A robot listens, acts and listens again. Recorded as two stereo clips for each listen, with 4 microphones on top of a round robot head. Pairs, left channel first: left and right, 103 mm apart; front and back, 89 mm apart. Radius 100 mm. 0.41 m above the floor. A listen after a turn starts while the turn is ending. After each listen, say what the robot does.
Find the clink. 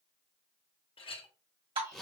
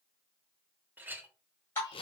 Turn 110° left.
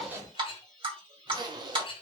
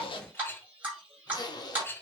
Turn 65° left.
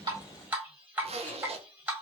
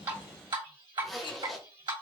Keep listening.
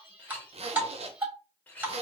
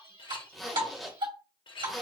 Turn 15° left.
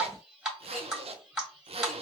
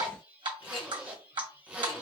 Keep listening.
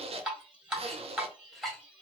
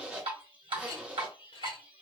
Keep listening.
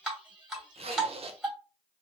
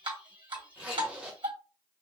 Facing where the clink came from. I can't hear it now.